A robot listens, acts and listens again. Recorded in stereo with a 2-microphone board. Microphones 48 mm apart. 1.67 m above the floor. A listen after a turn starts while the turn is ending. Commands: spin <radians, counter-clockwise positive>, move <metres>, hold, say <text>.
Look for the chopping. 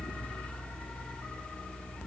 hold
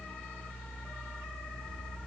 hold
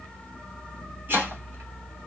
spin -0.70
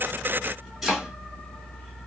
say Facing the chopping.